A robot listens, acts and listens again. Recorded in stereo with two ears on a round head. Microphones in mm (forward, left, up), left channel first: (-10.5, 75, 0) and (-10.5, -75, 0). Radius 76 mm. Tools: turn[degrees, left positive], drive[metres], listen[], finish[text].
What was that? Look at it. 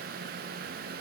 Action: listen[]
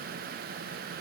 Action: listen[]
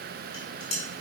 Thought: The dishes clattering: about 45° left or 135° left.
Action: turn[45]
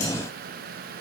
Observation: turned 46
Action: listen[]
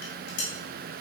Thought: So it is at 90° left.
Action: turn[90]
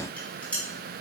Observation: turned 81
Thought: The dishes clattering is now 10° left.
Action: turn[10]
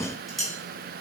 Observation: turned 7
Action: finish[Found it: dishes clattering, straight ahead.]